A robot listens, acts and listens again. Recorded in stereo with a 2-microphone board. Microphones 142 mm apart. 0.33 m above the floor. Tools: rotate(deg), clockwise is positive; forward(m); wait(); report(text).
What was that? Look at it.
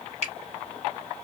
rotate(55)
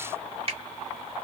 rotate(55)
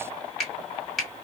report("Found it: a finger snap, straight ahead.")